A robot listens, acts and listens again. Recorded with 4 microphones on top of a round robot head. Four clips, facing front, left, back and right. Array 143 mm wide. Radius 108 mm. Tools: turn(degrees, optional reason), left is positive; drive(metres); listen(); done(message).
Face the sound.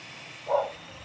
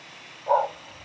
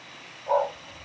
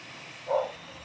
turn(degrees=100, reason="The dog barking: 100° left.")
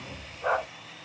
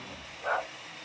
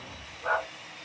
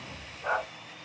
turn(degrees=15, reason="The dog barking is now 15° left.")
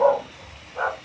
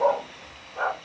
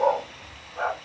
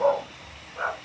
turn(degrees=35, reason="The dog barking is now 35° left.")
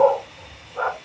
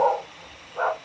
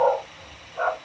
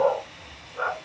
turn(degrees=40, reason="The dog barking is now 40° left.")
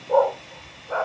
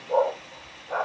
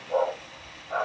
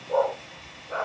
turn(degrees=30, reason="The dog barking is now 30° left.")
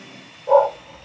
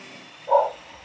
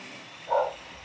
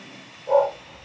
done("Facing the dog barking.")